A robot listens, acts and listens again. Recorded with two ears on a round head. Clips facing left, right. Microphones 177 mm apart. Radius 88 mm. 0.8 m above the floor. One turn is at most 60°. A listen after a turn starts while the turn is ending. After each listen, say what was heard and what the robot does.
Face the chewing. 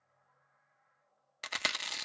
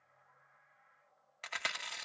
The chewing: about 50° left or 130° left. Turn 50° left.
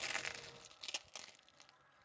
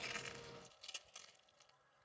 So it is at 80° left. Turn 60° left.
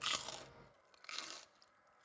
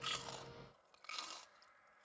The chewing is now 20° left. Turn 20° left.
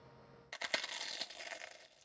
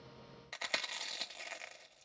Found it: chewing, straight ahead, under 1 m away.